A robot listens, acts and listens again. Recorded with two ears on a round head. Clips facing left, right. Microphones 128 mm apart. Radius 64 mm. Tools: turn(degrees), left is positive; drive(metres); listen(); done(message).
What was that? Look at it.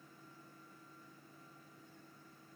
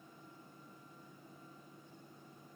listen()
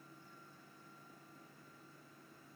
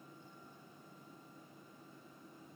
listen()
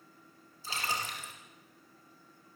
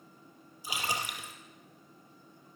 turn(degrees=-30)
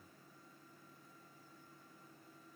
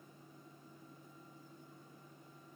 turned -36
listen()
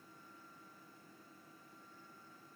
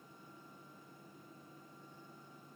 done("I heard a splash, but can't make it out now. It was about 25° left or 130° right.")